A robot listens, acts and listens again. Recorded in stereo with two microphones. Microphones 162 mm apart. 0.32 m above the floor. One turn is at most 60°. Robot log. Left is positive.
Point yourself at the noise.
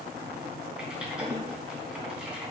cmd yaw -30
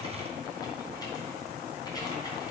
note: So it is at 25° left.
cmd yaw +25
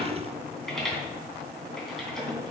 end: Found it: typing on a keyboard, straight ahead.